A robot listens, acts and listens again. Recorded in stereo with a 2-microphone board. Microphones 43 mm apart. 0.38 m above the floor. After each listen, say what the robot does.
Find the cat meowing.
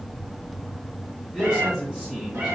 Turn 90° right.
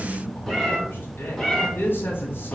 Turn 15° left.
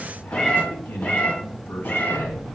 Turn 35° left.
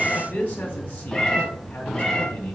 Turn 15° left.
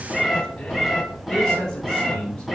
Facing the cat meowing, 1 to 2 m away.